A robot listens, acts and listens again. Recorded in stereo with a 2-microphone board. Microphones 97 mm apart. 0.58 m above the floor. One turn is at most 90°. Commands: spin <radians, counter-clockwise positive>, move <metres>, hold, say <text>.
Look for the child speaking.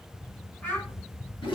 spin 0.26
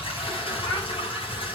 hold
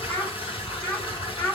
spin 0.44
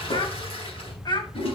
spin 1.57
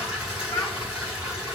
spin 0.70
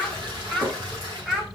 say Facing the child speaking, 1 to 2 m away.